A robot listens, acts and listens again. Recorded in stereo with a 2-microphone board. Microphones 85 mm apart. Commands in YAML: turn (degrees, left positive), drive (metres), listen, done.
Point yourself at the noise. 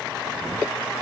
listen: true
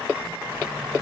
listen: true
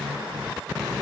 done: "I can't make out anything."